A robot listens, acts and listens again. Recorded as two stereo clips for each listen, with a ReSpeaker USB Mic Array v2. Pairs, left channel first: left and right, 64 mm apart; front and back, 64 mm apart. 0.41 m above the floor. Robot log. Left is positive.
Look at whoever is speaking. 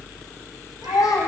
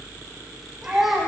note: The child speaking: 95° left.
cmd yaw +95
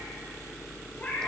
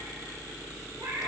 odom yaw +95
cmd idle
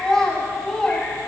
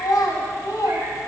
note: The child speaking is now 10° left.
cmd yaw +10
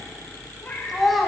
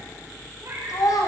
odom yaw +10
end: Found it: a child speaking, straight ahead, 1 to 2 m away.